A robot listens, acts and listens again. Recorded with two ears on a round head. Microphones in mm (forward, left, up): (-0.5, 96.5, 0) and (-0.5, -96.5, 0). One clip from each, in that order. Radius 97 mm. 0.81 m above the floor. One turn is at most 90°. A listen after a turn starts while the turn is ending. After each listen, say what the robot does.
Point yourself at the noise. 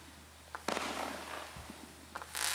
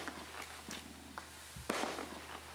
Turn 65° right.
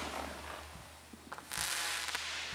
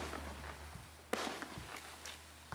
Turn 45° right.
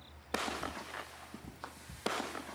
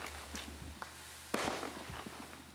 Found it: ticking, straight ahead.